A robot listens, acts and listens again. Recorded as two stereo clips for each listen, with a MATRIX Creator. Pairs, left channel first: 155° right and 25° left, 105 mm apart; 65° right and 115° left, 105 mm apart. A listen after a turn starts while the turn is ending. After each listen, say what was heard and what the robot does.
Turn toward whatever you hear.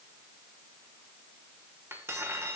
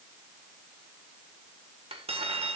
The cutlery clinking: 90° left. Turn 90° left.
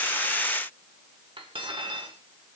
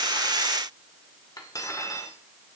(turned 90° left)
The cutlery clinking is now 15° right. Turn 15° right.
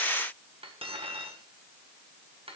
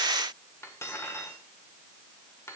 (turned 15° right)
Found it: cutlery clinking, straight ahead.